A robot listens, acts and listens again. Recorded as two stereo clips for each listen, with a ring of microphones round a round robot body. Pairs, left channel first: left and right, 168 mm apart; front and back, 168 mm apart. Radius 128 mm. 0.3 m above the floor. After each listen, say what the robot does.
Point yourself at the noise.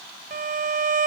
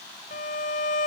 Turn 60° right.
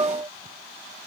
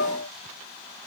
Turn 25° right.
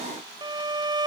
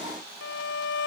Turn 25° right.
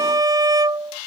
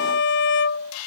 Turn 25° right.
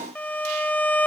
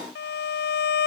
Turn 10° left.
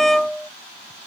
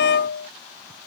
Facing the violin.